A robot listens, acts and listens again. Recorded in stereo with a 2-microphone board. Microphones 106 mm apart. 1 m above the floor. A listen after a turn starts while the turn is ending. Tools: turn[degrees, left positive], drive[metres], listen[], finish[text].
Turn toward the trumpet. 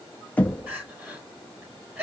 Action: listen[]
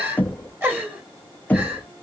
Action: listen[]
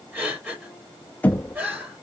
Action: finish[I can't make out a trumpet to turn to.]